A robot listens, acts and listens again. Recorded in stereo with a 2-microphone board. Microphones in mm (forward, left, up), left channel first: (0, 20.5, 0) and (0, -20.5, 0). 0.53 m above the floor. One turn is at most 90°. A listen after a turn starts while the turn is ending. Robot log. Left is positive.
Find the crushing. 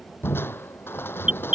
note: The crushing: about 65° left or 115° left.
cmd yaw +65
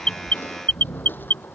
note: So it is at 55° left.
cmd yaw +55
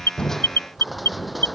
end: Facing the crushing.